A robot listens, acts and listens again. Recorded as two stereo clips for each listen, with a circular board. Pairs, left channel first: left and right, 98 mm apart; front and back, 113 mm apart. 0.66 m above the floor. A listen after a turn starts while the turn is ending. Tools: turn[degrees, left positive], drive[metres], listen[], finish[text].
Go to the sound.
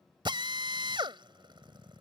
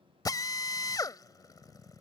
Thought: The drill: 55° right.
Action: turn[-55]
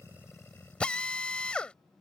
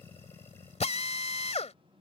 Thought: The drill is now 10° left.
Action: turn[10]
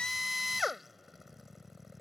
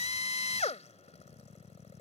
Action: drive[1.0]
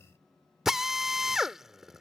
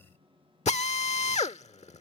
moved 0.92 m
Action: drive[1.0]
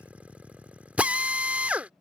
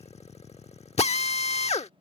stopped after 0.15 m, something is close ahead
Thought: The drill is now 15° right.
Action: turn[-15]
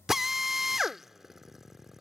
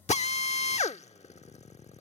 Action: finish[Arrived at the drill, straight ahead.]